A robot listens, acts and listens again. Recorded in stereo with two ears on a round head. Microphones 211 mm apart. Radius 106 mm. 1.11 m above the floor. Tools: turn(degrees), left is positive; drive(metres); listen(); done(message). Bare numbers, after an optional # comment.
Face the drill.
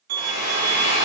# The drill: about 70° left or 110° left.
turn(70)
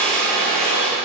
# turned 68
done("Found it: a drill, straight ahead.")